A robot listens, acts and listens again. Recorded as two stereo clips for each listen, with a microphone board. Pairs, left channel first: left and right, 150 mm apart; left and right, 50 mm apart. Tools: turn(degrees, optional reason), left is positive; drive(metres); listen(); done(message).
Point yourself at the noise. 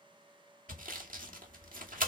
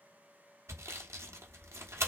turn(degrees=-90)
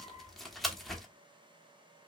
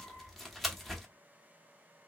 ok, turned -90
done("Found it: sawing, straight ahead.")